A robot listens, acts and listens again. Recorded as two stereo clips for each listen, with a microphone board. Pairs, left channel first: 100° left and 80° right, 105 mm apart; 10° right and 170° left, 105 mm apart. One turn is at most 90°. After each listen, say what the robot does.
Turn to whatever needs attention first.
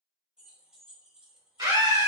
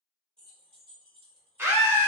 Turn 90° right.
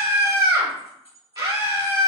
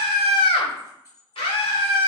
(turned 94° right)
Turn 30° right.
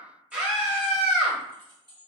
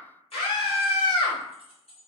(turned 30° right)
Facing the scream, 1 to 2 m away.